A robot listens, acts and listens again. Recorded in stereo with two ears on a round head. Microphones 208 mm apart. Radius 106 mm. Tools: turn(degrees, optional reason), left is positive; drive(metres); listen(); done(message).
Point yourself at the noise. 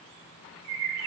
turn(degrees=-90)
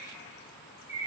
turn(degrees=-15, reason="So it is at 15° right.")
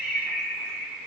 done("Facing the bird.")